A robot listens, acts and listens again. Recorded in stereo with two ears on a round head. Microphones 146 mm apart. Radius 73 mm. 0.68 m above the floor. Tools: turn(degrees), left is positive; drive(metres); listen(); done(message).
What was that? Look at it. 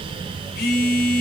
turn(degrees=65)
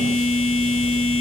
turn(degrees=55)
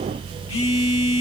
turn(degrees=35)
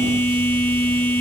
turn(degrees=15)
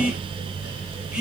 done("Found it: a phone buzzing, straight ahead, 1 to 2 m away.")